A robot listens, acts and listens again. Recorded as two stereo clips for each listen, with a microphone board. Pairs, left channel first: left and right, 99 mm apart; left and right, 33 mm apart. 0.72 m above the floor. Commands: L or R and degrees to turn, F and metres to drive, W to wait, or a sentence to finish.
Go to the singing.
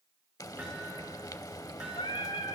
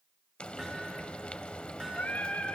L70
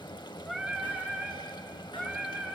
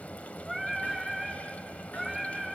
F1.0
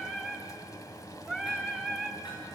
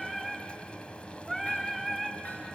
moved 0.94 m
F1.0
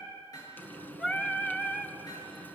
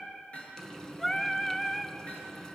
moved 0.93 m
L10
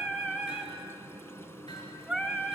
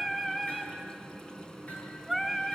F1.0
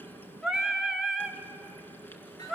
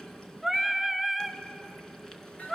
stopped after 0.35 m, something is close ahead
Arrived at the singing, straight ahead.